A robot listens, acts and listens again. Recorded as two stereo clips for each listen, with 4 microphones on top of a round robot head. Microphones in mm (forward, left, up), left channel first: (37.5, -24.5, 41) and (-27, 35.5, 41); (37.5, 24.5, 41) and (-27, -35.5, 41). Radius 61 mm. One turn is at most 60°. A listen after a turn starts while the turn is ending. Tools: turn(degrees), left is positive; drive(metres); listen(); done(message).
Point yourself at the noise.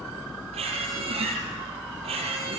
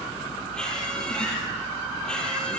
turn(degrees=60)
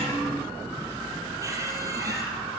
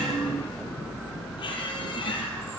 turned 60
turn(degrees=60)
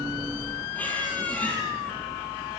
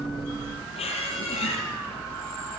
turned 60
turn(degrees=30)
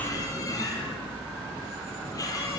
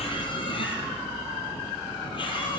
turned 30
turn(degrees=10)
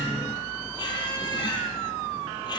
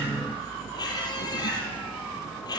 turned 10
done("Facing the squeak.")